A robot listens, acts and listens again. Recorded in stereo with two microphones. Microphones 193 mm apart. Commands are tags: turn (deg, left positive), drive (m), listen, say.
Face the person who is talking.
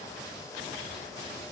<listen/>
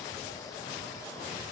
<listen/>
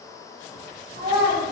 <turn deg="-25"/>
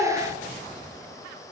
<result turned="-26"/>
<turn deg="-140"/>
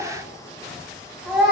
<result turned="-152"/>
<say>Found it: a child speaking, straight ahead.</say>